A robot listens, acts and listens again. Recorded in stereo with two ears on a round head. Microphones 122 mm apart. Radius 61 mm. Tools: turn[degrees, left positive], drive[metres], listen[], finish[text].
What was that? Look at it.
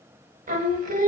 Thought: The singing: about 60° right or 120° right.
Action: turn[-60]
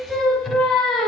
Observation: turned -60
Action: finish[Found it: singing, straight ahead, under 1 m away.]